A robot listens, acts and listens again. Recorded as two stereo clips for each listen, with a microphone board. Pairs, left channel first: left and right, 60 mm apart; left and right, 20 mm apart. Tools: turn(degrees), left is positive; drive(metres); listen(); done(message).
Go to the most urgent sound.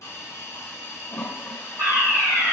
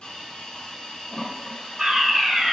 turn(degrees=-70)
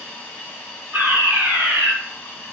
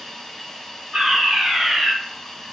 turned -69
turn(degrees=-35)
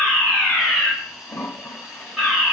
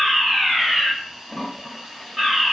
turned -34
drive(metres=1.0)
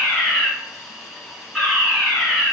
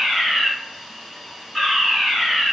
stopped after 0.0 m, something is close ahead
done("Something is in my way. I am facing the fire alarm but have not reached it.")